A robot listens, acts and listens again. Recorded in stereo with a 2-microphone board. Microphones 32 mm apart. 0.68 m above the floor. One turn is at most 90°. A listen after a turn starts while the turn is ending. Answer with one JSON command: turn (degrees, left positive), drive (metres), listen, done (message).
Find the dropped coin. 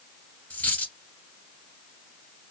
{"turn": 55}
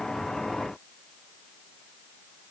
{"listen": true}
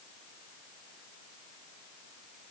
{"done": "I heard a dropped coin, but can't make it out now. It was about straight ahead or 70° left."}